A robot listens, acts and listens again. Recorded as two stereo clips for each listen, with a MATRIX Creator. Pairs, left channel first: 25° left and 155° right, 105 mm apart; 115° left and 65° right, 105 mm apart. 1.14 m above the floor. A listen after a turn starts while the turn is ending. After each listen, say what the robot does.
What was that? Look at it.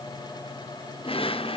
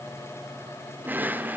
Facing the drawer, 2 to 4 m away.